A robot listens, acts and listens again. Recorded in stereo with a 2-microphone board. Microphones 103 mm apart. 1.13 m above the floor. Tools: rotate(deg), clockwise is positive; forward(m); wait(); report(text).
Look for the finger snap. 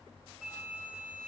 wait()
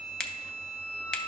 rotate(-30)
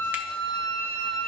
wait()
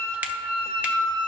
wait()
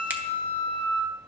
report("I heard a finger snap, but can't make it out now. It was about 20° right or 140° left.")